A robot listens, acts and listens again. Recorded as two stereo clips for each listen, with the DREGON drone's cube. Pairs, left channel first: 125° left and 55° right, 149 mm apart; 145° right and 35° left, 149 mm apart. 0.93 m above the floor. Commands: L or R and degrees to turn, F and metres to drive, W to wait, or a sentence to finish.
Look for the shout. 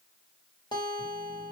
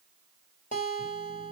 W
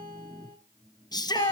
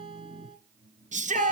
L65
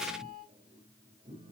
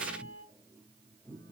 W
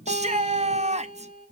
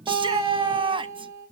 R20
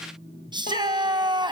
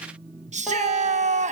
Found it: a shout, straight ahead.